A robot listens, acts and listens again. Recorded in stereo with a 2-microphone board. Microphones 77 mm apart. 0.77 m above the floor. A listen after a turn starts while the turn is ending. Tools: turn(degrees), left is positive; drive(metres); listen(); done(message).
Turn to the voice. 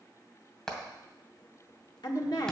turn(degrees=65)
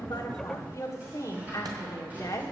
turn(degrees=40)
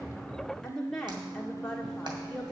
done("Facing the woman speaking.")